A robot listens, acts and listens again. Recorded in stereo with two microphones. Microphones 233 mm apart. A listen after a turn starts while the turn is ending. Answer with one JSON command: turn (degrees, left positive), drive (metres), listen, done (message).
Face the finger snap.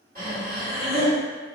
{"listen": true}
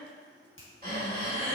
{"turn": 55}
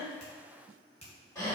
{"turn": 30}
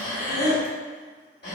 {"listen": true}
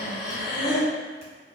{"listen": true}
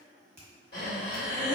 {"turn": -15}
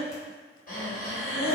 {"listen": true}
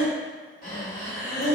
{"listen": true}
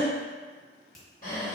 {"done": "Found it: a finger snap, straight ahead."}